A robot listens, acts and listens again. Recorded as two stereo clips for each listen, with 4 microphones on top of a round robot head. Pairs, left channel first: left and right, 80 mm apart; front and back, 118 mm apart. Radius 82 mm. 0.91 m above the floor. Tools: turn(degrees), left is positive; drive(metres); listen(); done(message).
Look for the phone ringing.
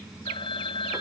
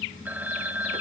turn(degrees=100)
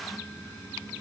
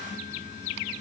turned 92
turn(degrees=10)
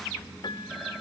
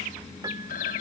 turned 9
done("Facing the phone ringing.")